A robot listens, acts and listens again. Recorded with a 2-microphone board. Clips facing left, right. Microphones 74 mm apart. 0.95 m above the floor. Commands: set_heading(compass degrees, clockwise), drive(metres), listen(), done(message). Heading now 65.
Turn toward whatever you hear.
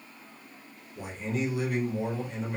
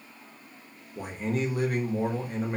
set_heading(115)
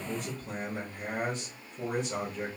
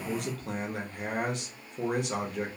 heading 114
set_heading(194)
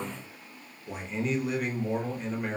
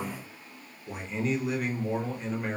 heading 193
done("Facing the man speaking, under 1 m away.")